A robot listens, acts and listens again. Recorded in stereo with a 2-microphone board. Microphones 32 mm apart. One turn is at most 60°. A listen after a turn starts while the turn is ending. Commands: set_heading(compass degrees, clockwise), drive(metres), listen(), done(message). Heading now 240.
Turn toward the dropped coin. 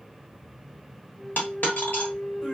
set_heading(180)
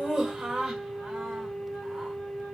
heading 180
listen()
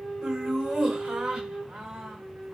done("I heard a dropped coin, but can't make it out now. It was about straight ahead or 60° left.")